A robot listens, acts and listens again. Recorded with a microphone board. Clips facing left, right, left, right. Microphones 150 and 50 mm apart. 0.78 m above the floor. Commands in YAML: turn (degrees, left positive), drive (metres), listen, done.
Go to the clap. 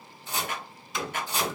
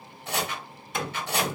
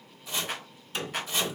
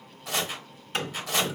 turn: 50
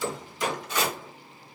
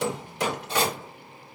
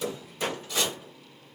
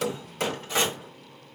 listen: true
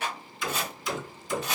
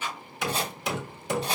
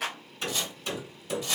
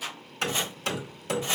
turn: 80
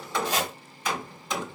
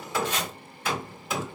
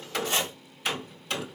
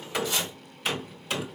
listen: true
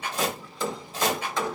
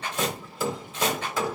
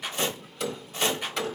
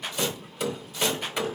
turn: 10
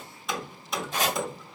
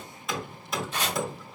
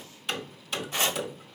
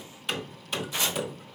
listen: true
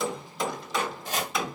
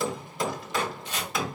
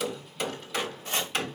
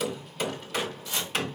listen: true
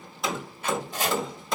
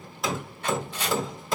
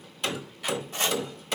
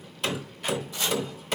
done: "I heard a clap from this way, but can't make it out now. I did not reach it."